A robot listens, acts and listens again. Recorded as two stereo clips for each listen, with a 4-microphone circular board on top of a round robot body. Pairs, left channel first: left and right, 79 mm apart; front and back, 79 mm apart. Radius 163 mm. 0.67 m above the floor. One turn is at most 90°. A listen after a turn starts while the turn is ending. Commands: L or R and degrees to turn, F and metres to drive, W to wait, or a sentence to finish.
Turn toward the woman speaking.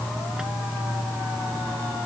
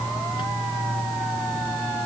W
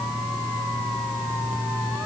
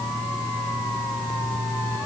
W
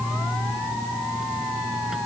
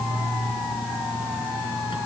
I can't make out a woman speaking.